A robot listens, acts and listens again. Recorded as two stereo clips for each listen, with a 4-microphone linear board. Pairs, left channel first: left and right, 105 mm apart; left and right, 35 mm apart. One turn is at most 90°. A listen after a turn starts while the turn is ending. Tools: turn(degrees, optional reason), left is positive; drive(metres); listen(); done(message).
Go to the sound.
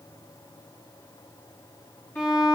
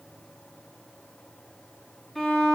turn(degrees=20, reason="The violin: about 20° left or 160° left.")
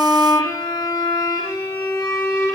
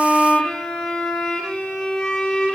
turn(degrees=90, reason="So it is at 140° left.")
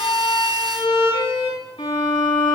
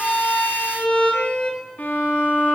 turn(degrees=60, reason="The violin is now 60° left.")
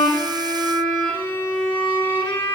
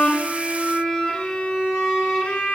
turn(degrees=35, reason="The violin is now 35° left.")
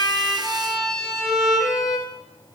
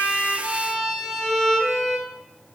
drive(metres=1.0)
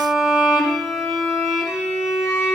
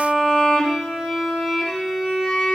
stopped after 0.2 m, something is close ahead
done("Blocked. The violin is further on, straight ahead.")